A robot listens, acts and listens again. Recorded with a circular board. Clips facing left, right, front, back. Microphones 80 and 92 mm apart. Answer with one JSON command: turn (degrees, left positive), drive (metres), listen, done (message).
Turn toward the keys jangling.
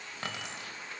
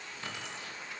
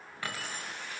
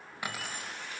{"turn": 110}
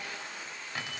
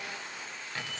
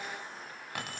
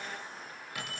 {"turn": 15}
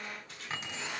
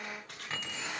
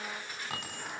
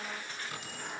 {"done": "Facing the keys jangling, 2 to 4 m away."}